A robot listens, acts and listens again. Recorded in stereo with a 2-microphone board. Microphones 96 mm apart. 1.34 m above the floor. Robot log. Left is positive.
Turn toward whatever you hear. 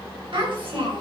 note: The child speaking: about 65° right or 115° right.
cmd yaw -65
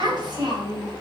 note: So it is at 50° right.
cmd yaw -50
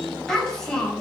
end: Facing the child speaking, over 4 m away.